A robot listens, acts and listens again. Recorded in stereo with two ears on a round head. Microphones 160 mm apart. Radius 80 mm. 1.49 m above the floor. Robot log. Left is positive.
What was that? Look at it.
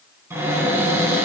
cmd yaw -30
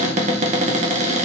note: So it is at 135° right.
cmd yaw -135
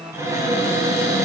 note: The cupboard door is now 20° right.
cmd yaw -20
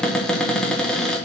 end: Facing the cupboard door.